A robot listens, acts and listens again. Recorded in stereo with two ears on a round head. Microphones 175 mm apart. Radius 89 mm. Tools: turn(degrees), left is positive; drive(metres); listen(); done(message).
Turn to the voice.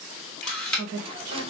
turn(degrees=-90)
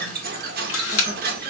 listen()
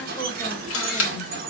listen()
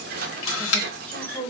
done("Facing the woman speaking, 1 to 2 m away.")